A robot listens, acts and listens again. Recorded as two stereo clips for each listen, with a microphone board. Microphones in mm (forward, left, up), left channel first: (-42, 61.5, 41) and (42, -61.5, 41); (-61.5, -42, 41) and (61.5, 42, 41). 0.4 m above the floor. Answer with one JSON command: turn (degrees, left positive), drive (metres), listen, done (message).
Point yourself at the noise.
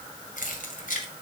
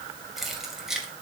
{"turn": 120}
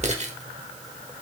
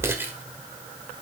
{"turn": -35}
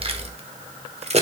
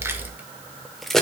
{"turn": -60}
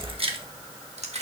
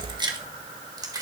{"turn": -25}
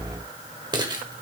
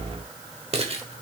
{"done": "Found it: keys jangling, straight ahead."}